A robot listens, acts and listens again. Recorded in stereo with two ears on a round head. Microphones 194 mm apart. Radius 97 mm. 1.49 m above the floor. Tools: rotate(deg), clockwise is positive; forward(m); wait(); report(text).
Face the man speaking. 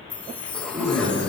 rotate(35)
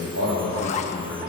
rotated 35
rotate(110)
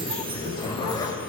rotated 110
rotate(-25)
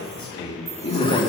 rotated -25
rotate(-30)
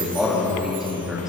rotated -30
report("Facing the man speaking, 2 to 4 m away.")